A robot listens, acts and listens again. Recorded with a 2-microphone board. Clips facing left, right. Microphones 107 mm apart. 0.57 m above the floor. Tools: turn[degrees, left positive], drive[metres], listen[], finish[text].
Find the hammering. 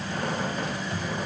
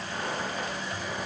Action: listen[]
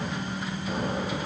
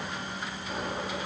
Action: listen[]
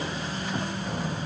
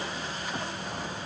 Action: finish[I can't make out hammering to turn to.]